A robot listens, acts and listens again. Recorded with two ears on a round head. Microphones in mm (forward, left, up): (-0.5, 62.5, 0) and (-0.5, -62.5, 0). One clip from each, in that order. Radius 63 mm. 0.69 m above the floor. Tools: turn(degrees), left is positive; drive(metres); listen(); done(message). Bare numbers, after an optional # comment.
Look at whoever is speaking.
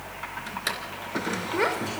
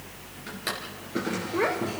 # The child speaking: about 60° left or 120° left.
turn(60)
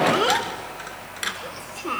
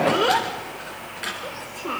# So it is at 30° left.
turn(30)
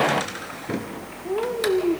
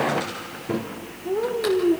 # The child speaking is now 25° left.
turn(25)
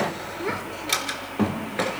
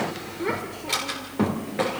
# The child speaking is now 10° left.
turn(10)
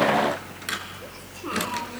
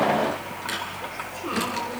listen()
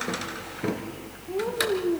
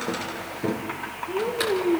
done("Found it: a child speaking, straight ahead, 1 to 2 m away.")